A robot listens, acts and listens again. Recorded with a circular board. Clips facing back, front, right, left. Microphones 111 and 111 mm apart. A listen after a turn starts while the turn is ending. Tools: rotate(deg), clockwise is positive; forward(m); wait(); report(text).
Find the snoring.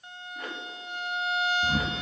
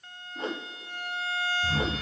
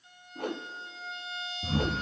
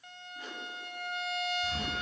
rotate(130)
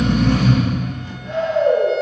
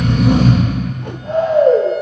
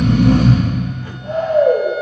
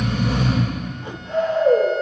rotate(50)
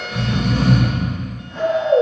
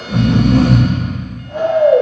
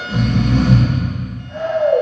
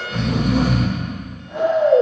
rotate(-10)
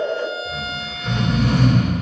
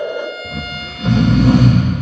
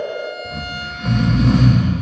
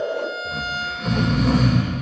report("Facing the snoring, 2 to 4 m away.")